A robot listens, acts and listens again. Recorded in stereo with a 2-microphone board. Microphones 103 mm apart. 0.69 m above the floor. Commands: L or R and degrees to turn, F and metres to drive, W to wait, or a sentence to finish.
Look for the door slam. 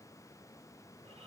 W
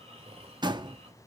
R45
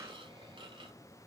W
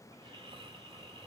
I heard a door slam, but can't make it out now. It was about straight ahead or 90° right.